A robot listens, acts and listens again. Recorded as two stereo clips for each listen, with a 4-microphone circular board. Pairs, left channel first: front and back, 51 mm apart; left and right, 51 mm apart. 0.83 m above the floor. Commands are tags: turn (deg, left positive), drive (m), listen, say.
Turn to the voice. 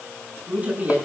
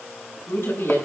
<turn deg="130"/>
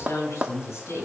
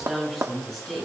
<turn deg="10"/>
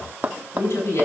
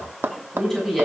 <say>Found it: a woman speaking, straight ahead.</say>